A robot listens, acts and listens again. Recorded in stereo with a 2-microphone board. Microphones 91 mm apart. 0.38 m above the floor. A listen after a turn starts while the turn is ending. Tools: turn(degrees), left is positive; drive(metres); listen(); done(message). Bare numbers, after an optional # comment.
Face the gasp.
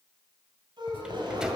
# The gasp: about 55° right or 125° right.
turn(-55)
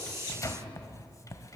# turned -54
listen()
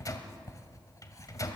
done("I heard a gasp, but can't make it out now. It was about straight ahead or 70° right.")